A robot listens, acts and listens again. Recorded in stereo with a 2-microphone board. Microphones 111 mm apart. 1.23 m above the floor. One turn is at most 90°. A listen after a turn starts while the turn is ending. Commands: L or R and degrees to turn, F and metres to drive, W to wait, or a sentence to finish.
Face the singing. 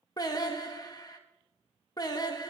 L35
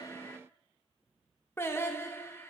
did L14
L20
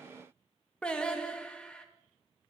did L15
L10
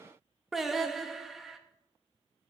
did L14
Facing the singing, under 1 m away.